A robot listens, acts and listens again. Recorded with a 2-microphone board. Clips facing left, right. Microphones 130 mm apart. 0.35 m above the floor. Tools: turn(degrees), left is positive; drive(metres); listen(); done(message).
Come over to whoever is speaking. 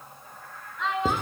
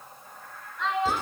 turn(degrees=30)
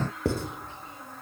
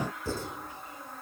listen()
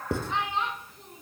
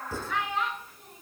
turn(degrees=150)
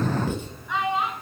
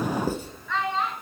turn(degrees=15)
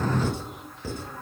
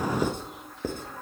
listen()
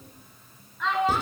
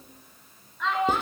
drive(metres=1.0)
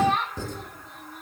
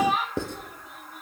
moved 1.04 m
drive(metres=1.0)
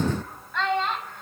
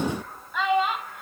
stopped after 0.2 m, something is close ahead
turn(degrees=-10)
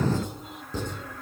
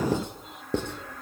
listen()
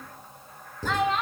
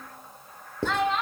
done("Arrived at the child speaking, straight ahead.")